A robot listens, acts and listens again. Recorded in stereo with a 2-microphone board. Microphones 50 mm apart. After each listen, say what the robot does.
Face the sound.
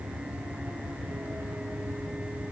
Keep listening.
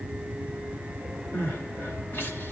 Turn 50° left.
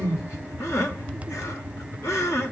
Turn 80° left.
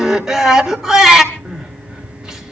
Turn 10° right.
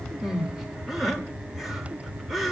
Found it: crying, straight ahead.